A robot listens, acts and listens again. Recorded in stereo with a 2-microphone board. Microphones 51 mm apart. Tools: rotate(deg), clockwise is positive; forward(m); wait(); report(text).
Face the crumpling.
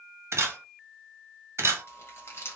rotate(-60)
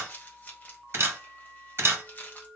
rotate(-40)
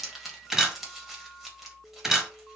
rotate(10)
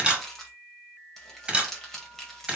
report("Found it: crumpling, straight ahead.")